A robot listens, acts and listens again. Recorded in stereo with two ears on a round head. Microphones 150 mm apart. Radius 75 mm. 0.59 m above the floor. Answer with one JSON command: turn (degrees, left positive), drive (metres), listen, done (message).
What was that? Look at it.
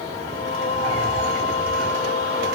{"turn": 40}
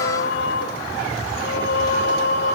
{"turn": 100}
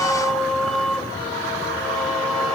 {"done": "Facing the singing, 1 to 2 m away."}